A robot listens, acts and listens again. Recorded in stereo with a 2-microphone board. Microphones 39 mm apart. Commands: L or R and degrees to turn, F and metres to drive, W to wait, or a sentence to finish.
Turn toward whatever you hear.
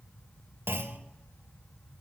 R65
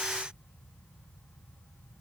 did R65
W
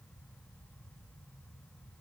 I heard a clunk, but can't make it out now. It was about straight ahead or 50° right.